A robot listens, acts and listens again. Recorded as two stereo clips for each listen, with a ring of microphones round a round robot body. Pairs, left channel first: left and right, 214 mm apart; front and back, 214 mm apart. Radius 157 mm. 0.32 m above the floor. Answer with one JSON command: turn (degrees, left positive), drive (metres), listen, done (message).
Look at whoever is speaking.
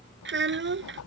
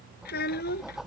{"turn": -60}
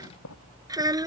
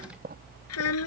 {"turn": -15}
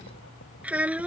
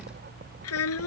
{"done": "Facing the child speaking."}